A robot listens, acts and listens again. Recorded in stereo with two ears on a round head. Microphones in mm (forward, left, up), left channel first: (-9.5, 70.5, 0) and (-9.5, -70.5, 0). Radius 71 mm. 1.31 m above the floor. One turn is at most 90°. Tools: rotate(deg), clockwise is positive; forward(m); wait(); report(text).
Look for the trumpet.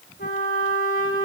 rotate(-50)
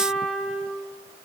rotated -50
report("Facing the trumpet, 2 to 4 m away.")